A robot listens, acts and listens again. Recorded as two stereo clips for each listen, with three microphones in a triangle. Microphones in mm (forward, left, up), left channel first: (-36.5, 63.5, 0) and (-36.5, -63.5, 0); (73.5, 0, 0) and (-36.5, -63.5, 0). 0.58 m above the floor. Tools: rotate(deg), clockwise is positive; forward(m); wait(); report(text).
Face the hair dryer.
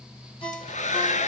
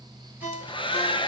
rotate(-75)
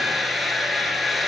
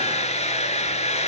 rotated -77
report("Found it: a hair dryer, straight ahead, 1 to 2 m away.")